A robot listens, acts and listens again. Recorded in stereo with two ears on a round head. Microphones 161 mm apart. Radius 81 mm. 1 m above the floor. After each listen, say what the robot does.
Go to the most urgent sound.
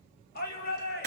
Turn 60° left.
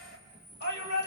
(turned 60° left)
Turn 60° left.
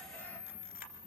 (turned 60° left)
Keep listening.
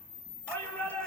Turn 10° left.
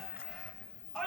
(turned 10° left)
Drive 1.0 m forward.
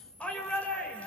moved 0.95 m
Drive 1.0 m forward.
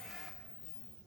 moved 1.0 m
Keep listening.
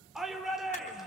Drive 1.0 m forward.
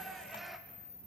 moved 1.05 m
Drive 1.0 m forward.
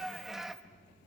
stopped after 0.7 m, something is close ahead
I am next to the shout.